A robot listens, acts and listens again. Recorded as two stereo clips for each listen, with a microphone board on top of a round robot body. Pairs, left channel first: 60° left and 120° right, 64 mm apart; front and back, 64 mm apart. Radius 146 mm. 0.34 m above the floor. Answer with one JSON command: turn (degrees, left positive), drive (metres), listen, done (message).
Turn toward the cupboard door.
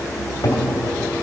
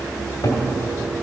{"turn": 20}
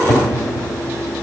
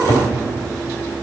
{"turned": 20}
{"done": "Found it: a cupboard door, straight ahead, 2 to 4 m away."}